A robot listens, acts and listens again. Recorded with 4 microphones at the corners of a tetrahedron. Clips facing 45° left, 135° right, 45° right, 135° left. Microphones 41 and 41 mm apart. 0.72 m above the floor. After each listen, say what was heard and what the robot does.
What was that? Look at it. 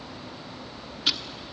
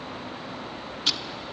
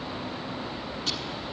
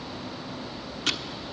The ticking: 125° left. Turn 125° left.
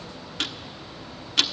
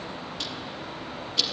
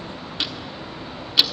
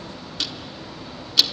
The ticking is now 20° left. Turn 20° left.
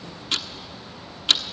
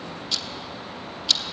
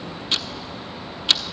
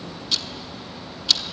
Found it: ticking, straight ahead.